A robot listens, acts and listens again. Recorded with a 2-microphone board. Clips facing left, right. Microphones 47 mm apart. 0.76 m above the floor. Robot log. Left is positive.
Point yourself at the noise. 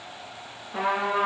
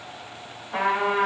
note: The trumpet: about 70° right or 110° right.
cmd yaw -70
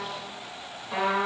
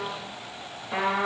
end: Found it: a trumpet, straight ahead.